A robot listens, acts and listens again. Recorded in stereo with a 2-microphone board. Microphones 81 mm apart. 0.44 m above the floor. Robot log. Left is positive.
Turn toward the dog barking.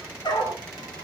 note: The dog barking: about 60° left or 120° left.
cmd yaw +60
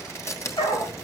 note: So it is at 75° left.
cmd yaw +75
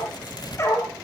note: The dog barking is now 35° left.
cmd yaw +35
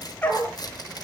note: The dog barking is now 20° left.
cmd yaw +20
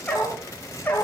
note: The dog barking is now 20° left.
cmd yaw +20
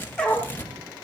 note: The dog barking is now 10° left.
cmd yaw +10
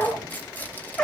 end: Facing the dog barking.